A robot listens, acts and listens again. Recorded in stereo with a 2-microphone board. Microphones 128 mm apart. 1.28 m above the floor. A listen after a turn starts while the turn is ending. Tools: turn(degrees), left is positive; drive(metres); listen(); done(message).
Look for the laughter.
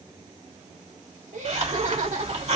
turn(degrees=-65)
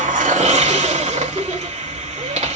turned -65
listen()
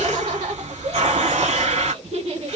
turn(degrees=-50)
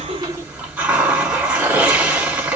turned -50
listen()
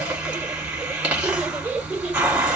listen()
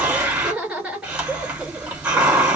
turn(degrees=-10)
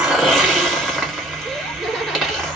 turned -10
listen()
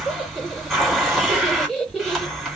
done("Found it: laughter, straight ahead, 2 to 4 m away.")